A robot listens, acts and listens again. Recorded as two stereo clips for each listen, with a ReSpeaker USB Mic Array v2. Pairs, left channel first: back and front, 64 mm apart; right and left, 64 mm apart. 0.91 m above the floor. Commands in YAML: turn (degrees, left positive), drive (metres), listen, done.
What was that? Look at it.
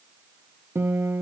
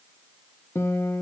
turn: -45
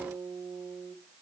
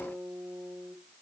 done: "Found it: a guitar, straight ahead."